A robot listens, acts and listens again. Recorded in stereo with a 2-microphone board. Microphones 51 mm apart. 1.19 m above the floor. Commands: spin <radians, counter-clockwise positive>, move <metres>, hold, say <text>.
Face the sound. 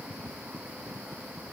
hold
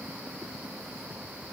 hold
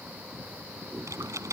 spin -1.57
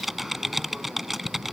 say Found it: typing on a keyboard, straight ahead.